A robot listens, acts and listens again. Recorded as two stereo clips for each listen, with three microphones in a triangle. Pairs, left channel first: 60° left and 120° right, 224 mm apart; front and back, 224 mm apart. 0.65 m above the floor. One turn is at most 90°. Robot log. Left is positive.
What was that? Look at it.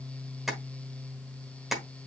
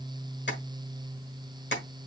note: The tapping: 30° right.
cmd yaw -30
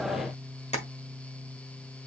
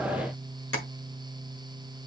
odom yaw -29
end: Facing the tapping, 1 to 2 m away.